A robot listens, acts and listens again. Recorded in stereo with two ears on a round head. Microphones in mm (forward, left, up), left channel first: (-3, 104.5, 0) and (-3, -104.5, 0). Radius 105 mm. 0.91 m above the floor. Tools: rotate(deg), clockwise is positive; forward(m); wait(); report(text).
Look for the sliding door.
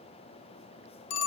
wait()
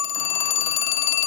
wait()
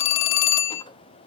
report("I can't make out a sliding door, only a phone ringing.")